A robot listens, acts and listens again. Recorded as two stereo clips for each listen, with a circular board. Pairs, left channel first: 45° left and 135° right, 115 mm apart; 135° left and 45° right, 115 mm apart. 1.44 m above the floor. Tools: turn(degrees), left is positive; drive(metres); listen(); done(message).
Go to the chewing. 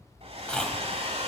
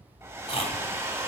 turn(degrees=125)
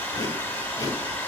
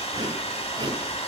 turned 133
drive(metres=1.0)
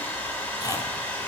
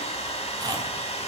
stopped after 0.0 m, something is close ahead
done("Blocked. The chewing is further on, straight ahead.")